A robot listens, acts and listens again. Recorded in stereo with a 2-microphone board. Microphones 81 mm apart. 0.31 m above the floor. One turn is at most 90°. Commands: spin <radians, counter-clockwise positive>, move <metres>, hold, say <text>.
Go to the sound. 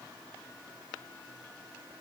hold
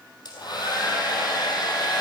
spin 0.96
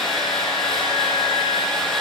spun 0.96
move 1.0
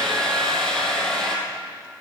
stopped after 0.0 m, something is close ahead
say Blocked. The hair dryer is further on, straight ahead.